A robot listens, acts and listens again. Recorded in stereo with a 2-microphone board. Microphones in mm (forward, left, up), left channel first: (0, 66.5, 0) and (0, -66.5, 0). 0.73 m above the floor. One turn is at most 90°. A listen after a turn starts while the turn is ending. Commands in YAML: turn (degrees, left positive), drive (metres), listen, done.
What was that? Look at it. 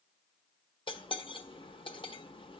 turn: 40
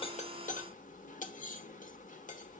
turn: 90
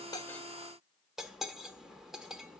done: "Found it: cutlery clinking, straight ahead, 1 to 2 m away."